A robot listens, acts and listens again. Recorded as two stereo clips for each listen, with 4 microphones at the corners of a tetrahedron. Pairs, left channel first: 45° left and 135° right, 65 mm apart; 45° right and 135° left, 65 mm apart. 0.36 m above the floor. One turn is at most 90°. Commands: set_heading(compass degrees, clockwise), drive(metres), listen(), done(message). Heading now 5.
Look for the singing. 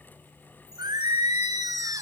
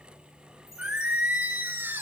set_heading(95)
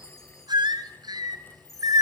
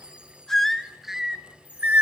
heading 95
set_heading(185)
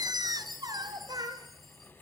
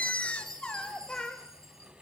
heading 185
set_heading(275)
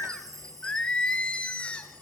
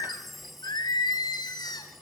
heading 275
set_heading(305)
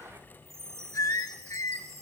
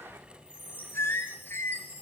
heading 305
done("Facing the singing, 1 to 2 m away.")